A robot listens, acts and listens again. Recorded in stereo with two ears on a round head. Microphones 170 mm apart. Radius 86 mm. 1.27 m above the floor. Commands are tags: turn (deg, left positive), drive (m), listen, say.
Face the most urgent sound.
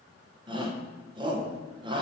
<turn deg="-25"/>
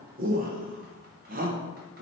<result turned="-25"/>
<turn deg="-125"/>
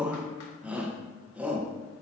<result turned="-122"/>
<say>Facing the shout, 1 to 2 m away.</say>